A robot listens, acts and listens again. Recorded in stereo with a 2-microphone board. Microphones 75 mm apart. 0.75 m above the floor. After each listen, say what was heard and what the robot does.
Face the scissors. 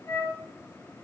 Keep listening.
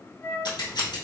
The scissors: about 70° left or 110° left. Turn 70° left.
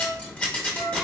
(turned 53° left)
So it is at 15° left. Turn 15° left.
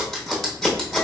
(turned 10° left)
Facing the scissors, under 1 m away.